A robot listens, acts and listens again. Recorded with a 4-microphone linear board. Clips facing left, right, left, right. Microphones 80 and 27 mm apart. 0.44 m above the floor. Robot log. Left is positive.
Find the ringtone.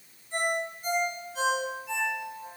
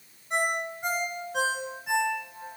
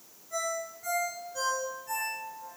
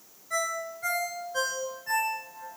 cmd yaw -90
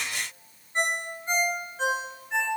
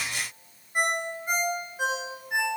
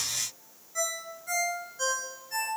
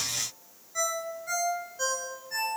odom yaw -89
note: So it is at 10° right.
cmd yaw -10
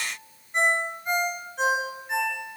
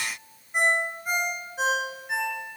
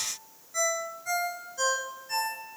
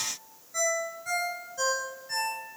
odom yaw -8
end: Facing the ringtone, 2 to 4 m away.